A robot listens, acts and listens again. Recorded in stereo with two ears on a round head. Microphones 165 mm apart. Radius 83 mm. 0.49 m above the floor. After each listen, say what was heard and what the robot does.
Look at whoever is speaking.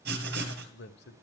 The man speaking: about 65° left or 115° left. Turn 65° left.
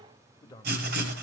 So it is at 20° left. Turn 20° left.
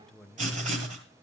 Facing the man speaking, 1 to 2 m away.